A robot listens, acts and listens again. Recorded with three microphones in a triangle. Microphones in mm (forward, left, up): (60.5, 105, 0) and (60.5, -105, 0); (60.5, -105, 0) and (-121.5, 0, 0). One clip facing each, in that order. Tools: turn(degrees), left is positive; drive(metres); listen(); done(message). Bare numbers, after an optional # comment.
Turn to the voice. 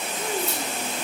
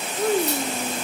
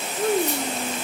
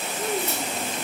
# The child speaking: 55° right.
turn(-55)
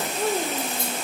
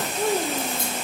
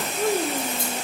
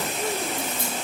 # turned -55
done("Facing the child speaking.")